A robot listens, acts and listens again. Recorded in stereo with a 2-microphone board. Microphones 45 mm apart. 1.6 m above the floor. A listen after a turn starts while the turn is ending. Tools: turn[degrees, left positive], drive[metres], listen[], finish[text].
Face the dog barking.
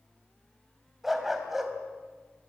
Action: turn[-30]
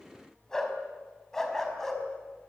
Thought: So it is at 10° left.
Action: turn[10]
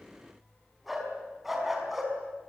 Action: finish[Facing the dog barking.]